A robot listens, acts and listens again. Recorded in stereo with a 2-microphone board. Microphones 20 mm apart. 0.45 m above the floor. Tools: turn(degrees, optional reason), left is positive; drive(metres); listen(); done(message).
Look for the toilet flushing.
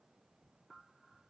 listen()
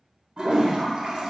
turn(degrees=-45, reason="The toilet flushing: about 45° right or 135° right.")
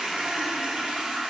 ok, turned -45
turn(degrees=-90, reason="So it is at 90° right.")
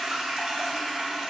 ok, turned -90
turn(degrees=-35, reason="The toilet flushing is now 35° right.")
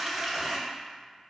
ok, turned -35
turn(degrees=-15, reason="The toilet flushing is now 15° right.")
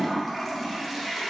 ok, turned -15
done("Found it: a toilet flushing, straight ahead, under 1 m away.")